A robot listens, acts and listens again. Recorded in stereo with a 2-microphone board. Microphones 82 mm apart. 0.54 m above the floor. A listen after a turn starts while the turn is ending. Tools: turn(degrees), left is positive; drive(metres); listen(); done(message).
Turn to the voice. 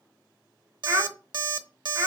turn(degrees=-35)
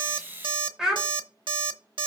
turn(degrees=-10)
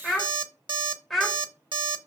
done("Found it: a child speaking, straight ahead, 1 to 2 m away.")